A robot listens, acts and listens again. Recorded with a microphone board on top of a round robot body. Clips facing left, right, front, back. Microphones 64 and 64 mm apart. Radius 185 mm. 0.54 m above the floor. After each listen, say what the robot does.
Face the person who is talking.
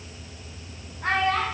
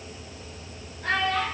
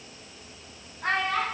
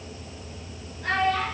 Turn 45° left.
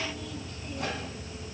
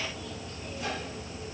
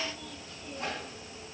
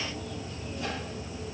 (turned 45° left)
Keep listening.
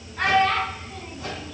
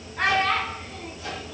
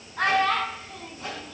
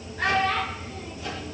Facing the child speaking, over 4 m away.